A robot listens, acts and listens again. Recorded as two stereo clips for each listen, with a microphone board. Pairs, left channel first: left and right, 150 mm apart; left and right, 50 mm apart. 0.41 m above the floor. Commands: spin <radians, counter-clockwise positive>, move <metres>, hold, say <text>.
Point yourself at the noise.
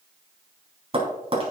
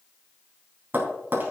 spin -0.70
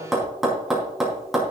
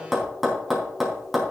say Facing the tapping, 2 to 4 m away.